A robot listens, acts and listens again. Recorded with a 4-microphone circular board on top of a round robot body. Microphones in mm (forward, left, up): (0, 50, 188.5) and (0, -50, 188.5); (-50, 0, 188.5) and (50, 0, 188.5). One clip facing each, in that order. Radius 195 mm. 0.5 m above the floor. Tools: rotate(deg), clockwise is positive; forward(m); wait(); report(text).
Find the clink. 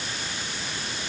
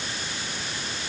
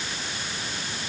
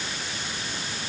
wait()
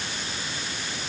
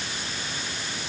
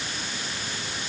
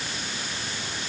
wait()
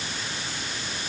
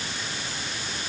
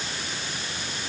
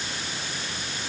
report("I can't make out a clink to turn to.")